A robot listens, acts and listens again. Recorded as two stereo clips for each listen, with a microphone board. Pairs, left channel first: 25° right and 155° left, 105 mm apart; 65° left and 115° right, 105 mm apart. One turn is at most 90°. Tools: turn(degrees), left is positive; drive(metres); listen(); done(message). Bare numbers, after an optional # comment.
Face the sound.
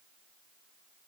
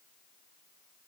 listen()
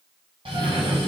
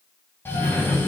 # The cough: 135° left.
turn(90)
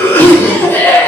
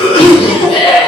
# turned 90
# The cough is now 45° left.
turn(45)
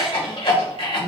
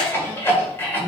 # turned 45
done("Facing the cough.")